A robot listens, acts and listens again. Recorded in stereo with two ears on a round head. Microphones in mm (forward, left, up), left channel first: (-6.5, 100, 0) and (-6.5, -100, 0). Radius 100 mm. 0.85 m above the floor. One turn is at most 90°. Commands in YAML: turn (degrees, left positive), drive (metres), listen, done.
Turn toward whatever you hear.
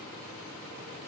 listen: true
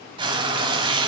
turn: -20
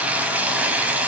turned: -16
done: "Facing the frying, 1 to 2 m away."